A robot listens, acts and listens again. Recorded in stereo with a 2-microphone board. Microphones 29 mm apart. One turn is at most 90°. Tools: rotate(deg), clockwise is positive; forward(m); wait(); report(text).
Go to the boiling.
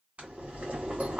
rotate(50)
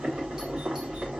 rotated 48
rotate(75)
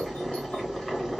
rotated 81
forward(1.0)
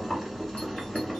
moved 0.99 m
rotate(-10)
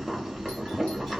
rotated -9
forward(1.0)
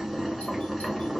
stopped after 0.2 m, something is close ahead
report("Arrived at the boiling, straight ahead.")